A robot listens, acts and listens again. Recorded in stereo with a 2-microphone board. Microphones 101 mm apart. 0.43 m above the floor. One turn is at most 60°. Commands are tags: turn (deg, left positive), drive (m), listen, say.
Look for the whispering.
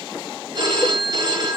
<listen/>
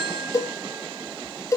<listen/>
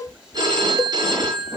<turn deg="-30"/>
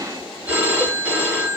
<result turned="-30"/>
<listen/>
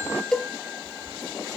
<listen/>
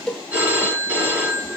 <say>I heard whispering, but can't make it out now. It was about 20° left or 140° right.</say>